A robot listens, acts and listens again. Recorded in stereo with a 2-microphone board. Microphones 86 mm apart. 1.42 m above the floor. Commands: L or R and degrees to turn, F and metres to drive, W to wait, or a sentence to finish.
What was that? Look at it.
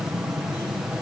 W
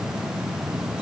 W
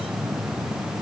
I can't make out anything to turn to.